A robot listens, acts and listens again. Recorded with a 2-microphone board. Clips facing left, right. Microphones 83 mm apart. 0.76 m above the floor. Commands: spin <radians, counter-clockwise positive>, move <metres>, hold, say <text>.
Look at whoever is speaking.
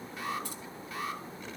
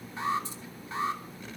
hold
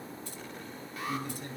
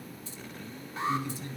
spin 0.87
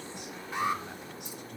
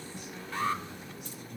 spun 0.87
hold
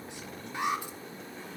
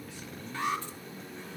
spin 1.40
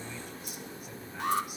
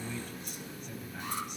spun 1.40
spin 0.17
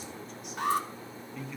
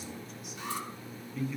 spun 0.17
say Found it: a man speaking, straight ahead.